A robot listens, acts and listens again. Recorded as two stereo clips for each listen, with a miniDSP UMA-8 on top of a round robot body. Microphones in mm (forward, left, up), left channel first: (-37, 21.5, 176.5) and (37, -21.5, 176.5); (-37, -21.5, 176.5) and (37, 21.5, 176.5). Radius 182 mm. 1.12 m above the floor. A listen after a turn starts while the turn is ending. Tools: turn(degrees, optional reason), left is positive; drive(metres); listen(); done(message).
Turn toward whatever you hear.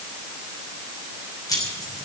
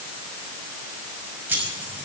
turn(degrees=100, reason="The keys jangling: 100° left.")
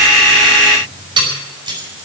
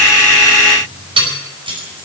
done("Found it: keys jangling, straight ahead, over 4 m away.")